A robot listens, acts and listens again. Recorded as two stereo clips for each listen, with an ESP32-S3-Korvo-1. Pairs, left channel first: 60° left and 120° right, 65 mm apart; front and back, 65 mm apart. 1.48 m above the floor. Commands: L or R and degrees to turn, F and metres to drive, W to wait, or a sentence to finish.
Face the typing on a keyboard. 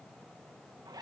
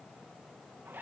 W
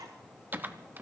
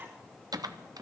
L180
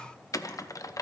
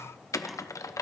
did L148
L30
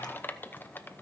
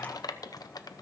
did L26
Facing the typing on a keyboard, under 1 m away.